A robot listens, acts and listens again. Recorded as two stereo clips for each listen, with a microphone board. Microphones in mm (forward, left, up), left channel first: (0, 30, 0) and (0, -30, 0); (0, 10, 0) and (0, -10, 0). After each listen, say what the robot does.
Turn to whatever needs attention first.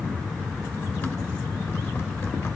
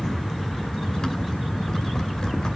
Keep listening.
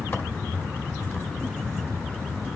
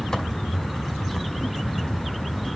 Keep listening.
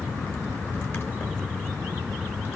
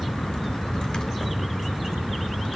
I can't make out anything urgent to turn to.